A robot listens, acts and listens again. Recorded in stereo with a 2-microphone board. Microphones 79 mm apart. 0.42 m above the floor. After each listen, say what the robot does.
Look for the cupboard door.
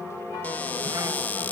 Turn 20° left.
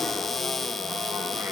Found it: a cupboard door, straight ahead.